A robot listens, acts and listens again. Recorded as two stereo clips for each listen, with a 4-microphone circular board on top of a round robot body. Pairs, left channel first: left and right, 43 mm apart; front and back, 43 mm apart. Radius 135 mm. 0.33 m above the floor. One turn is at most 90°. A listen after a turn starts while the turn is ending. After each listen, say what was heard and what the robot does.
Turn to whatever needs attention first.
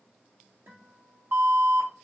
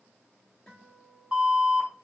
The alarm: 110° right. Turn 90° right.
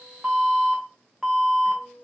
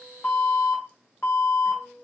Facing the alarm.